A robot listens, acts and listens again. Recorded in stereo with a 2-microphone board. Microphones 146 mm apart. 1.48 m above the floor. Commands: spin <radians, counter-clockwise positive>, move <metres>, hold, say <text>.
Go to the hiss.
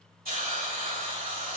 spin -1.57
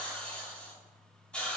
spin 0.17
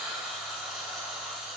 move 1.0
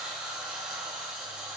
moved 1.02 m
move 1.0
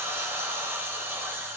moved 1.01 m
spin -0.26
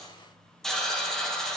move 1.0
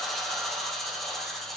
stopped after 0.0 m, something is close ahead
say Arrived at the hiss, straight ahead.